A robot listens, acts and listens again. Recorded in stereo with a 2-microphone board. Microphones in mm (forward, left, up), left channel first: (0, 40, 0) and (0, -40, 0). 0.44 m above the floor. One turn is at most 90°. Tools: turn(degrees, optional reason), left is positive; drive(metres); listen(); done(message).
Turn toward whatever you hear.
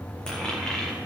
turn(degrees=30)
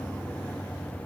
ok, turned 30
listen()
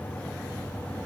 done("I heard a dropped coin, but can't make it out now. It was about 20° right or 140° left.")